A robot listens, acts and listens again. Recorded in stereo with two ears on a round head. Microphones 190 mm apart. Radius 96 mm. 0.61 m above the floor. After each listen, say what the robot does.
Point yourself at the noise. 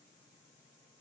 Keep listening.
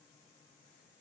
Keep listening.
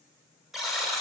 Turn 30° left.
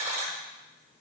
Turn 30° right.
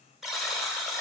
Found it: a buzzer, straight ahead, under 1 m away.